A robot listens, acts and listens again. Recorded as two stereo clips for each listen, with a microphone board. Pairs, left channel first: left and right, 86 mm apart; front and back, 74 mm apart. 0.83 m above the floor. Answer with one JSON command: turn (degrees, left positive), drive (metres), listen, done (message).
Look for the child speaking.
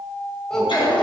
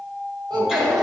{"turn": 175}
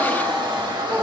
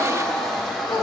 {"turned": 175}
{"turn": 20}
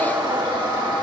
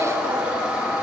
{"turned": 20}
{"listen": true}
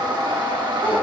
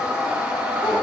{"listen": true}
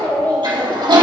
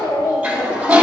{"turn": 20}
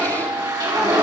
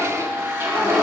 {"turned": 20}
{"listen": true}
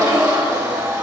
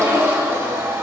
{"listen": true}
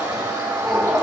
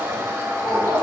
{"done": "Facing the child speaking."}